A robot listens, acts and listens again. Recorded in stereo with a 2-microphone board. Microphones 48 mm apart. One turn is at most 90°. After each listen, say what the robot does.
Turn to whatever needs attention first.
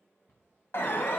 Turn 60° left.
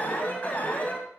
Turn 45° left.
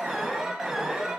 Turn 10° right.
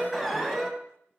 Facing the alarm.